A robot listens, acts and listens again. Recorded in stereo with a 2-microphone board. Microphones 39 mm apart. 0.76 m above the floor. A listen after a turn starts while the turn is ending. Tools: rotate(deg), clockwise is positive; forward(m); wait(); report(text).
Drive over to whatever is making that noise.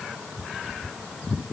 wait()
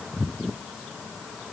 wait()
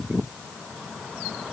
report("I can't make out anything.")